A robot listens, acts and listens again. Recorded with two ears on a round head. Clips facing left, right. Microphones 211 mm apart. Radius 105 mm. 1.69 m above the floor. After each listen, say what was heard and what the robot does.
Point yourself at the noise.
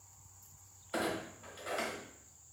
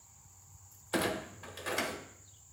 The clunk: about 65° right or 115° right. Turn 65° right.
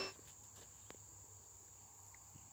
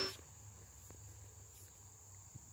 Keep listening.
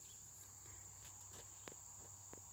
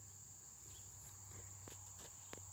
I heard a clunk, but can't make it out now. It was about straight ahead or 50° right.